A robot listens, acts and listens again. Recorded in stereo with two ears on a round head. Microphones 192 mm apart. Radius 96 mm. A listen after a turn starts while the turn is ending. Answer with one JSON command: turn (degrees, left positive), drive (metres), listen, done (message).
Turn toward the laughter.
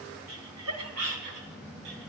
{"turn": -90}
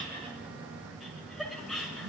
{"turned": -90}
{"done": "Found it: laughter, straight ahead, over 4 m away."}